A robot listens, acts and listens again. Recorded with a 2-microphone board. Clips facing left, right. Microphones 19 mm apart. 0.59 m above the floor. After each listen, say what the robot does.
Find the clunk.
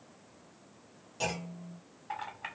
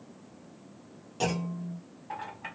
Turn 30° right.
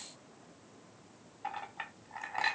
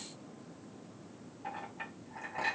Keep listening.
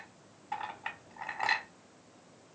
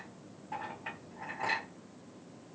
I heard a clunk, but can't make it out now. It was about 20° left or 140° right.